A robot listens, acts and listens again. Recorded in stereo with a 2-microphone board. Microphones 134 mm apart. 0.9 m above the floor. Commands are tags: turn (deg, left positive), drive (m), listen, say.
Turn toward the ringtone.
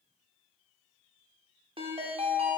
<turn deg="-45"/>
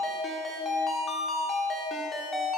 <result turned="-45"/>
<say>Found it: a ringtone, straight ahead.</say>